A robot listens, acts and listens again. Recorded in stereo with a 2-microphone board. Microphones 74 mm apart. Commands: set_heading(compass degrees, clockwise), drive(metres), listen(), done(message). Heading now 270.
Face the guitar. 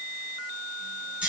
listen()
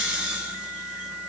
listen()
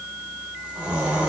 done("I can't make out a guitar, only snoring.")